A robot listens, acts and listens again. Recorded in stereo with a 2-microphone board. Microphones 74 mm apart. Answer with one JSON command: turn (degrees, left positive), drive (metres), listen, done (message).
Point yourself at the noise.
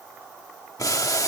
{"turn": 55}
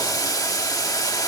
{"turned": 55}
{"turn": 65}
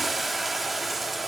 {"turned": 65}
{"done": "Facing the boiling."}